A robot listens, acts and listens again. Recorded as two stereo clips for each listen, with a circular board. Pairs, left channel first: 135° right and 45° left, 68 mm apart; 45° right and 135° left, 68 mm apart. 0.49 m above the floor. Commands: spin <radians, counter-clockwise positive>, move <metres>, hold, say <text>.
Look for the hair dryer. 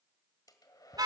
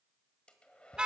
spin -2.09
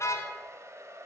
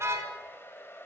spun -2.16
say Found it: a hair dryer, straight ahead.